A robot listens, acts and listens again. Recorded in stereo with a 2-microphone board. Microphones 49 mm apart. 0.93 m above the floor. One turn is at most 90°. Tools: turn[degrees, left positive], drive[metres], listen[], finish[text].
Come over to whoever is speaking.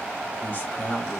Thought: The man speaking: about 40° left or 140° left.
Action: turn[40]
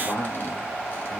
Thought: So it is at 100° left.
Action: turn[90]
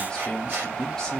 Thought: The man speaking is now 15° left.
Action: turn[15]
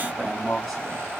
Action: drive[1.0]
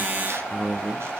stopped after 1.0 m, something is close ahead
Action: finish[I am next to the man speaking.]